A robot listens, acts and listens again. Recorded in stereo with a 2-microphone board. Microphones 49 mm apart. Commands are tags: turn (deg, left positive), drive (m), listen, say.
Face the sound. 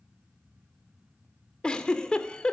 <turn deg="20"/>
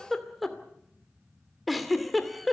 <say>Found it: a giggle, straight ahead, 2 to 4 m away.</say>